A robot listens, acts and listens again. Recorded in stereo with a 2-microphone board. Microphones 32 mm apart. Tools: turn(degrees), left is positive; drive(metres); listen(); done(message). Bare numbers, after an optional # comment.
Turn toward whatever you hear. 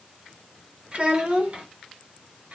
# The child speaking: about 45° right or 135° right.
turn(-45)
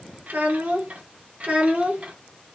# So it is at 40° right.
turn(-40)
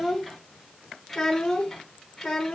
# The child speaking is now 10° left.
turn(10)
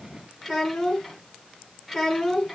done("Facing the child speaking, 2 to 4 m away.")